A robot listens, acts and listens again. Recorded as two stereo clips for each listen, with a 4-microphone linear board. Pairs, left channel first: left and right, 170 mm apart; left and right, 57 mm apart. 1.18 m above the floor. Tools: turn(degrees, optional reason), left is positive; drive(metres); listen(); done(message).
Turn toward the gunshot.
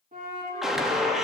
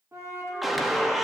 turn(degrees=-30)
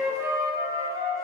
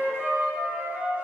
listen()
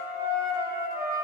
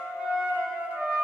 done("I heard a gunshot, but can't make it out now. It was about 25° left or 145° right.")